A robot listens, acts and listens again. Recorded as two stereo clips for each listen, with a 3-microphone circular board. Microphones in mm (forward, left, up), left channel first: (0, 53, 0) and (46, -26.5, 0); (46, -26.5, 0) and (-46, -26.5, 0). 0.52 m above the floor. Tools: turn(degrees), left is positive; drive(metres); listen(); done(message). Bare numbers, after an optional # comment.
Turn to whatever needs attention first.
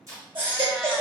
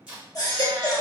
# The baby crying: 45° right.
turn(-45)
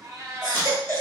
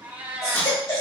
# The baby crying is now 10° right.
turn(-10)
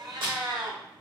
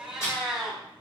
listen()
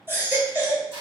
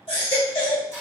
done("Facing the baby crying, 1 to 2 m away.")